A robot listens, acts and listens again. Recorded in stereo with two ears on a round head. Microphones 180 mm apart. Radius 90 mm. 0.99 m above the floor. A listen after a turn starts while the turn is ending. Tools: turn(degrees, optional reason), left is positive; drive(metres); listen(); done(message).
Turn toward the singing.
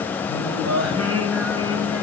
turn(degrees=-90)
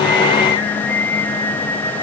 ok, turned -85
turn(degrees=15, reason="So it is at 15° left.")
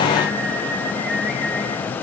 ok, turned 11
done("Found it: singing, straight ahead, over 4 m away.")